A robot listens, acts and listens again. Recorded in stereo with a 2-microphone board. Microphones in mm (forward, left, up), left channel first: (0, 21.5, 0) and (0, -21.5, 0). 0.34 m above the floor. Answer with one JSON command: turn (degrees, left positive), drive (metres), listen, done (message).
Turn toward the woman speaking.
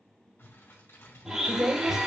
{"turn": -30}
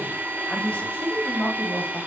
{"turn": 40}
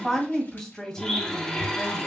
{"turn": 15}
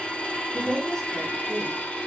{"turn": 10}
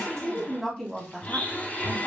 {"done": "Facing the woman speaking, 2 to 4 m away."}